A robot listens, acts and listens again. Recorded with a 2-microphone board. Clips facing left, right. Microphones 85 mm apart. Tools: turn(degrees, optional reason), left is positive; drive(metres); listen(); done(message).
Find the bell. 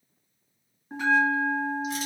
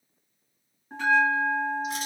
turn(degrees=30)
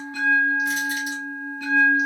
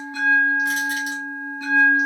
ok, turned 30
turn(degrees=-25, reason="So it is at 25° right.")
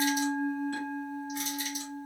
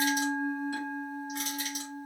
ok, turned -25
turn(degrees=-15, reason="The bell is now 15° right.")
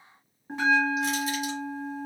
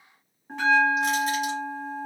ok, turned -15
done("Facing the bell.")